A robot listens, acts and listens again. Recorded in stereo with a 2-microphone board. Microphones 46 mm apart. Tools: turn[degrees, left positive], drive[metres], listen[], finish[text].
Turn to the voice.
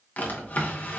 Action: listen[]
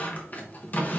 Action: listen[]
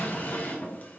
Action: finish[I can't make out anyone speaking to turn to.]